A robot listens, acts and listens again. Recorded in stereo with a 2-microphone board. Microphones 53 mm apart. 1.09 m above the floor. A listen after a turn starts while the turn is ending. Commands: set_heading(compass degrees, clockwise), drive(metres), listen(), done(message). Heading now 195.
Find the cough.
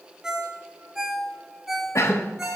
set_heading(130)
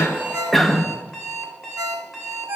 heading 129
done("Found it: a cough, straight ahead, 1 to 2 m away.")